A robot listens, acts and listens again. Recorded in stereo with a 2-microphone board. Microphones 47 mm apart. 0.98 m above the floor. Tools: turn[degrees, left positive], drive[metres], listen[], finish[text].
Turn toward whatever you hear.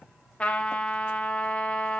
Thought: The trumpet: about 25° left or 155° left.
Action: turn[25]
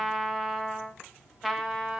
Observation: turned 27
Action: finish[Facing the trumpet.]